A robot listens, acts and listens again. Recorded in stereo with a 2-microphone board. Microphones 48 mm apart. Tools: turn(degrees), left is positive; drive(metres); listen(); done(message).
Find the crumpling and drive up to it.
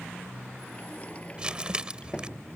turn(degrees=-20)
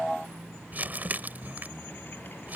turn(degrees=-140)
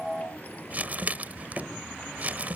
turn(degrees=-40)
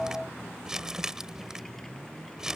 turn(degrees=-15)
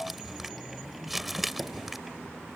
drive(metres=1.0)
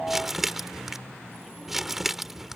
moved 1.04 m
turn(degrees=-10)
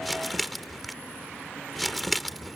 drive(metres=1.0)
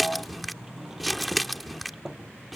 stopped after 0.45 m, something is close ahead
done("Arrived at the crumpling, straight ahead.")